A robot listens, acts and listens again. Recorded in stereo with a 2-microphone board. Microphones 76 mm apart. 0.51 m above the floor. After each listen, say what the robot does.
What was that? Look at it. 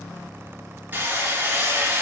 Turn 25° right.
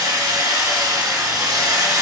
Turn 130° right.
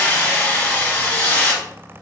Turn 15° left.
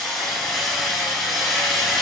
Found it: hammering, straight ahead.